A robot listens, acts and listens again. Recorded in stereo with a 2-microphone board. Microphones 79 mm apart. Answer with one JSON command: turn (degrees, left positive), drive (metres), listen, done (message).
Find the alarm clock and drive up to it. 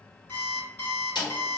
{"turn": 35}
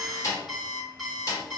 {"drive": 1.0}
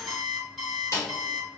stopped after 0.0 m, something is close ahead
{"done": "Blocked. The alarm clock is further on, straight ahead."}